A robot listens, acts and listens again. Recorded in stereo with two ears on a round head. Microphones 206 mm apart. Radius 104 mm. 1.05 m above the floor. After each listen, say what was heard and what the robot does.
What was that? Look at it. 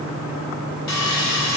Turn 90° left.
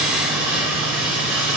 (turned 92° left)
Found it: sawing, straight ahead, 2 to 4 m away.